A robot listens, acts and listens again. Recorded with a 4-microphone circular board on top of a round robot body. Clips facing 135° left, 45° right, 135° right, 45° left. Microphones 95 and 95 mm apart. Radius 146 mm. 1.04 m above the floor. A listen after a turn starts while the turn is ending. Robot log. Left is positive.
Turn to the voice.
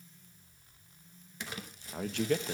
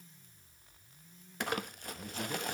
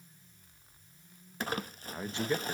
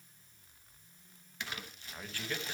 note: The man speaking: 155° left.
cmd yaw +155
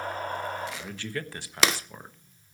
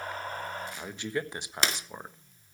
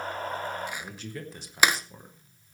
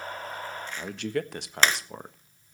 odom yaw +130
note: The man speaking is now 25° left.
cmd yaw +25
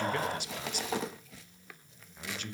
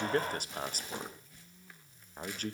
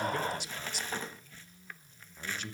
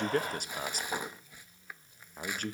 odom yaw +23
end: Found it: a man speaking, straight ahead, 1 to 2 m away.